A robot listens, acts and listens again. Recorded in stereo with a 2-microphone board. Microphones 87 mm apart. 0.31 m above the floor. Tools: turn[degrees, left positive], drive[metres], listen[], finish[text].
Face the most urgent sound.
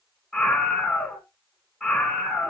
Action: turn[30]
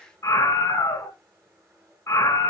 Thought: So it is at 150° left.
Action: turn[150]
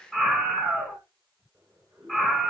Thought: The scream is now 10° left.
Action: turn[10]
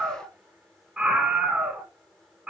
Action: finish[Facing the scream, 2 to 4 m away.]